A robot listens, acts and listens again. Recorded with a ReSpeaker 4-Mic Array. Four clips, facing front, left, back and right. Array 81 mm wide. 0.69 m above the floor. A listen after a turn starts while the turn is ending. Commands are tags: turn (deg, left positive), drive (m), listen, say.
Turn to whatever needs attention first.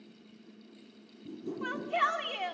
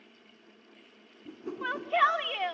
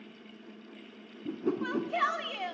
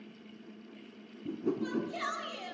<turn deg="85"/>
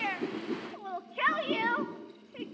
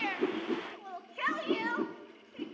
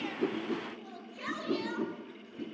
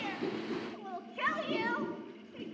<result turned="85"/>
<say>Facing the shout, 2 to 4 m away.</say>